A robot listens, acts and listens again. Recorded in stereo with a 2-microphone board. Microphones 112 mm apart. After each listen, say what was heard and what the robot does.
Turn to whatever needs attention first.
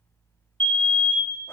Turn 30° left.
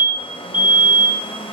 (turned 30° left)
So it is at 20° right. Turn 20° right.
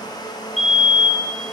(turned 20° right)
Found it: a fire alarm, straight ahead.